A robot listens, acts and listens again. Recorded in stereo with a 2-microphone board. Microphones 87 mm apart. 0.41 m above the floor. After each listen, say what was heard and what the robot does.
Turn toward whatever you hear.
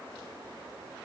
Keep listening.
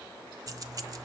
The keys jangling: about 45° right or 135° right. Turn 45° right.
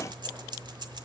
So it is at 80° right. Turn 80° right.
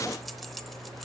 Found it: keys jangling, straight ahead.